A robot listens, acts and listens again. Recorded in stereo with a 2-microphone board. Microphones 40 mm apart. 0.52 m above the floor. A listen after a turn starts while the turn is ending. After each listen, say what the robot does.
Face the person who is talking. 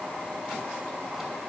Keep listening.
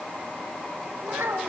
Turn 90° right.
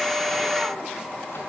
Keep listening.
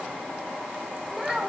Turn 10° right.
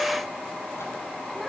Keep listening.
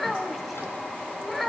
Found it: a child speaking, straight ahead, 1 to 2 m away.